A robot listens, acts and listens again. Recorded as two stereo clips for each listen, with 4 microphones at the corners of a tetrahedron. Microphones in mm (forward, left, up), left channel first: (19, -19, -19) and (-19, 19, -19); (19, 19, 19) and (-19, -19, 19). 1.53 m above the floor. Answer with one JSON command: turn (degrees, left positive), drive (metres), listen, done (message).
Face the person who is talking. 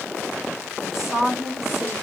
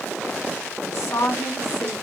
{"turn": 50}
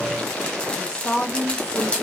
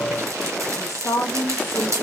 {"turn": 20}
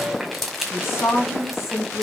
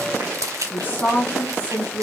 {"turn": -20}
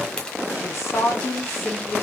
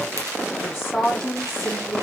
{"turn": -10}
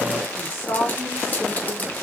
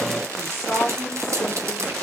{"done": "Found it: a woman speaking, straight ahead."}